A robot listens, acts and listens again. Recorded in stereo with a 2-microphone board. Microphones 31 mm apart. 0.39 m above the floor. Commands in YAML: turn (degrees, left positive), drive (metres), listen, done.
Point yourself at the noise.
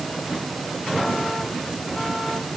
listen: true
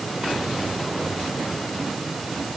listen: true
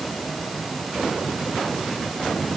done: "I can't make out anything."